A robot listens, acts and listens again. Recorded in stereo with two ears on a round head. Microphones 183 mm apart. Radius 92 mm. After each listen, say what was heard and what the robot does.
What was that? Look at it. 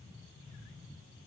Keep listening.
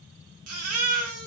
Turn 90° right.
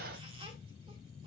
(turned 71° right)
Nothing new. It was at 20° right. Turn 20° right.
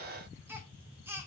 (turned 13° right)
The baby crying is now 10° right. Turn 10° right.
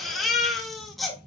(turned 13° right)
Found it: a baby crying, straight ahead, 2 to 4 m away.